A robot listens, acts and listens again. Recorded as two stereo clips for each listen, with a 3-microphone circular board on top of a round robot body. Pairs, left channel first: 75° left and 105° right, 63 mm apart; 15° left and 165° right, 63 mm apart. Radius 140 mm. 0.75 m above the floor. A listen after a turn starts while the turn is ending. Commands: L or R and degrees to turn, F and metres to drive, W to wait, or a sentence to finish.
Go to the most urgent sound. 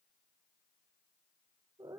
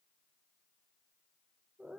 W
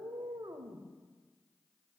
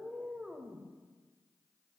W
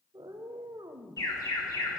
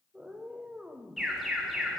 L110
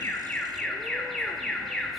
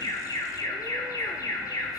R15
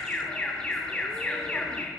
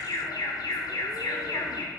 F1.0
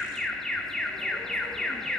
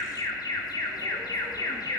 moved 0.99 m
R10
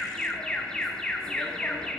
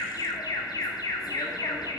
F1.0
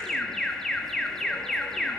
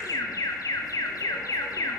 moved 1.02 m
R10
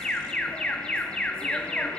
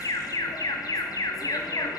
F1.0
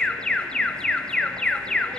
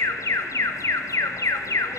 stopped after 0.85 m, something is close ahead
I am next to the alarm.